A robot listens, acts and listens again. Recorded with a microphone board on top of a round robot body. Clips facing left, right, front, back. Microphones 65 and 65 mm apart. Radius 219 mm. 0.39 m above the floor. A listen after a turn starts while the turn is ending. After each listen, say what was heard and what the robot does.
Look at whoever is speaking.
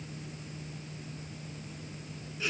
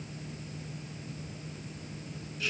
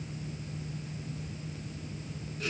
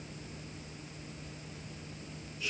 Keep listening.
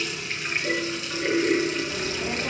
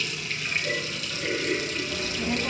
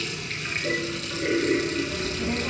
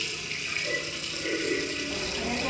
The child speaking: 160° left. Turn 160° left.
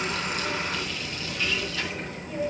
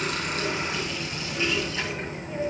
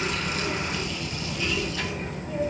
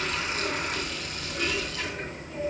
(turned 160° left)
The child speaking is now 25° right. Turn 25° right.
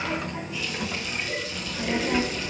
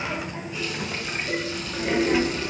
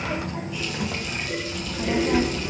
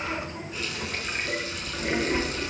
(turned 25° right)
Found it: a child speaking, straight ahead, 2 to 4 m away.